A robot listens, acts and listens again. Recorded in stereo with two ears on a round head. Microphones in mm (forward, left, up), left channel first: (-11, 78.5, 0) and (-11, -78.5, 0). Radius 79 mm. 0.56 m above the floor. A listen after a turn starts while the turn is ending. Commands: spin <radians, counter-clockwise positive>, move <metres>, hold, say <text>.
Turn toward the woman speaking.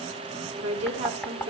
spin -0.70
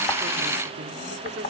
hold
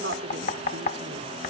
spin -1.75
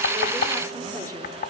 hold
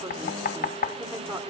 spin -0.35
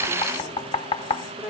say Facing the woman speaking.